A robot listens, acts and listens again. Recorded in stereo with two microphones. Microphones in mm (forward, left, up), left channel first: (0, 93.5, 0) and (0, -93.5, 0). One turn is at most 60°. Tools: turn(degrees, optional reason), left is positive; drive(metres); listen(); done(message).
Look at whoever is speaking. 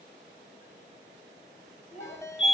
turn(degrees=45, reason="The child speaking: about 45° left or 135° left.")
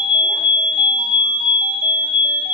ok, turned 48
listen()
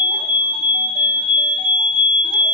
listen()
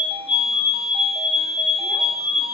done("I heard a child speaking, but can't make it out now. It was about 5° right or 90° left.")